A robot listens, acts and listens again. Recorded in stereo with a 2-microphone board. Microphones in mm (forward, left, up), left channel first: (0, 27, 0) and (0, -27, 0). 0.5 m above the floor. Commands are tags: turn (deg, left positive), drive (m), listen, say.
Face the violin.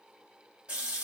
<listen/>
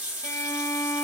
<turn deg="75"/>
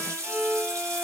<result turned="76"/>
<say>Facing the violin, under 1 m away.</say>